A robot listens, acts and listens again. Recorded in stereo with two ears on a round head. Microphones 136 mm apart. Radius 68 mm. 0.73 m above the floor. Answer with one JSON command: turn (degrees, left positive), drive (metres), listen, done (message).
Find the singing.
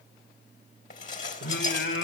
{"turn": 90}
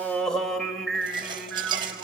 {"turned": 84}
{"done": "Found it: singing, straight ahead."}